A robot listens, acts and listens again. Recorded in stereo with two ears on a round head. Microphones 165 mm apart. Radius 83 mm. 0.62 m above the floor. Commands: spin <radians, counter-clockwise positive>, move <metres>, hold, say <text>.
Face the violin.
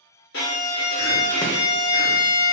spin 1.13
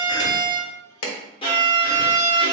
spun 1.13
spin 0.52
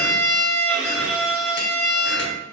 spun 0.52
say Found it: a violin, straight ahead.